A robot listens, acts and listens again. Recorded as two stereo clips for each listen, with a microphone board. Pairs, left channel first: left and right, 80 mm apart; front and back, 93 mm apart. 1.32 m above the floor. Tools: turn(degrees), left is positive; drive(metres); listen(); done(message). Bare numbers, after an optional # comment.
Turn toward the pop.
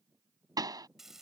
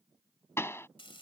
# The pop: 60° right.
turn(-60)
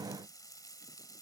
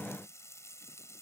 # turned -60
done("Facing where the pop came from. I can't hear it now.")